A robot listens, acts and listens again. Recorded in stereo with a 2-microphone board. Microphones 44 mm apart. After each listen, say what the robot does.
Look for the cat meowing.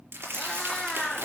Turn 30° left.
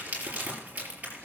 Keep listening.
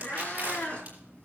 Turn 150° left.
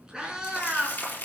Turn 15° right.
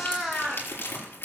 Facing the cat meowing, 2 to 4 m away.